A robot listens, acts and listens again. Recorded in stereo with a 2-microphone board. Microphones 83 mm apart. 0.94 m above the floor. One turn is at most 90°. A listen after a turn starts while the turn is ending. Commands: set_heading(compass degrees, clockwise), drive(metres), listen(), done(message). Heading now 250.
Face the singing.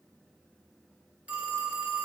listen()
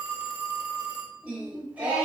set_heading(265)
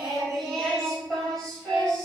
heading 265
set_heading(255)
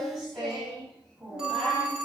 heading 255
done("Found it: singing, straight ahead.")